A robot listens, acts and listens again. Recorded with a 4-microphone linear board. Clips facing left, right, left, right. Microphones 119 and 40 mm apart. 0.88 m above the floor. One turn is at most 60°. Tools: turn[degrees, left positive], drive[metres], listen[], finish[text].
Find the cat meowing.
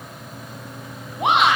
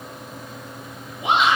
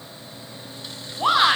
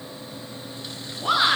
Action: listen[]
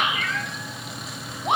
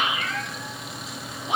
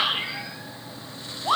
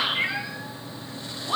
Thought: The cat meowing: about 30° right or 150° right.
Action: turn[-30]
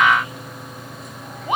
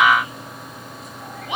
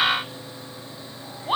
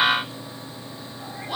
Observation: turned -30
Action: listen[]
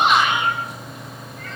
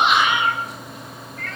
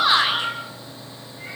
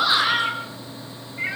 Thought: So it is at 120° right.
Action: turn[-60]
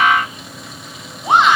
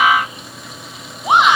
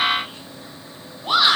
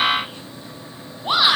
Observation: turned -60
Thought: Nothing new. It was at 60° right.
Action: turn[-60]
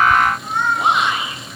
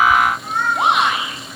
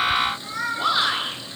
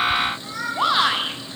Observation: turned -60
Action: finish[Found it: a cat meowing, straight ahead, over 4 m away.]